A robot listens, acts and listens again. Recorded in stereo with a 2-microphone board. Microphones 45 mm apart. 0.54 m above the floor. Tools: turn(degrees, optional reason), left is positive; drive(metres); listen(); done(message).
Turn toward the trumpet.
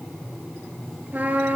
turn(degrees=-40, reason="The trumpet: about 40° right or 140° right.")
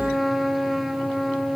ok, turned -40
done("Facing the trumpet.")